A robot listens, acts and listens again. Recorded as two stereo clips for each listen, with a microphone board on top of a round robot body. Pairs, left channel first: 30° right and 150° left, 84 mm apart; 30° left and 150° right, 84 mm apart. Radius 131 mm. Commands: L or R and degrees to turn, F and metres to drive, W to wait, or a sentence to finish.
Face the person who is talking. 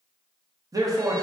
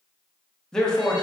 L110
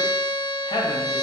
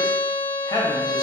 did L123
R15
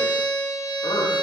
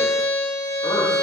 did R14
W
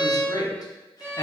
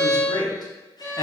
Facing the man speaking.